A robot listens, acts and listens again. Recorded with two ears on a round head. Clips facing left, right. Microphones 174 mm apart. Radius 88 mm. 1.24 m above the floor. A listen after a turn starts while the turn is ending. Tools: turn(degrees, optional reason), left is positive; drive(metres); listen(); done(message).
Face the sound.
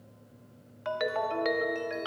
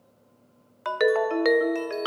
turn(degrees=-65, reason="The ringtone: about 65° right or 115° right.")
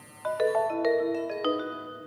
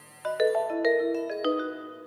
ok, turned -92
turn(degrees=-15, reason="So it is at 15° right.")
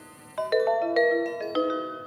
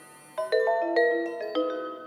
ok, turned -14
done("Facing the ringtone, 1 to 2 m away.")